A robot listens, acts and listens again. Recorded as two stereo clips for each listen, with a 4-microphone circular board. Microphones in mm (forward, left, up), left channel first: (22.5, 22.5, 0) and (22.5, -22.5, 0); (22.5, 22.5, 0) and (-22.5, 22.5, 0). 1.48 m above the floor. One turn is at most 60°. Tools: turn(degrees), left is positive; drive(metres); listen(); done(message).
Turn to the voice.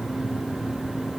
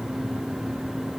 listen()
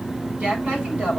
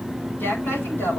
turn(degrees=-30)
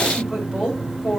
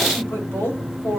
turn(degrees=-10)
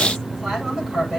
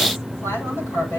done("Found it: a woman speaking, straight ahead.")